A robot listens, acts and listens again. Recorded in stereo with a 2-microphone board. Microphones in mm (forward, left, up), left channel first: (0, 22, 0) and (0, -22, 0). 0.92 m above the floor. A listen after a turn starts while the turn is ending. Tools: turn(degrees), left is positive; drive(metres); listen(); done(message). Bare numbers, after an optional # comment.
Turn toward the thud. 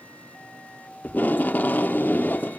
listen()
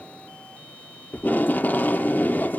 listen()
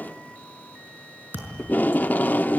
# The thud: about 50° right or 130° right.
turn(-50)
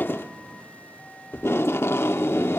listen()
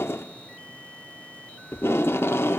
done("I heard a thud, but can't make it out now. It was about straight ahead or 80° right.")